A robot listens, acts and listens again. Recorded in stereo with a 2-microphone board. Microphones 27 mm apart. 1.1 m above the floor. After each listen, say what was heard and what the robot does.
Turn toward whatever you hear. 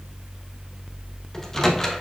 The microwave: about 15° left or 165° left. Turn 15° left.
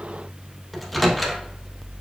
Found it: a microwave, straight ahead, under 1 m away.